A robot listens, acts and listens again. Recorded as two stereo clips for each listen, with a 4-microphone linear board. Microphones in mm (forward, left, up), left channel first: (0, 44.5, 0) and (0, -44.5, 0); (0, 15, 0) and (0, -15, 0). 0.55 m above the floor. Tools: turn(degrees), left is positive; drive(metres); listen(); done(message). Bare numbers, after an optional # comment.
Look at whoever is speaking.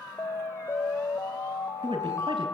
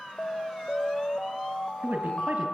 turn(-90)
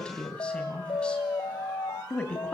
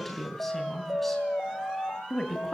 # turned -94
# So it is at 10° left.
turn(10)
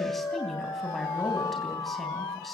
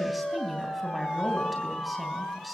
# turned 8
done("Facing the woman speaking, 2 to 4 m away.")